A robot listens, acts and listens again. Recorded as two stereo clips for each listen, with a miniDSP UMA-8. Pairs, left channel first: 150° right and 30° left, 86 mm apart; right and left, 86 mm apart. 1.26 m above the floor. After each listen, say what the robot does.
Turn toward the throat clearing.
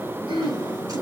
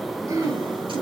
Turn 40° left.
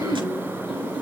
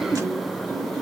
Facing the throat clearing, 2 to 4 m away.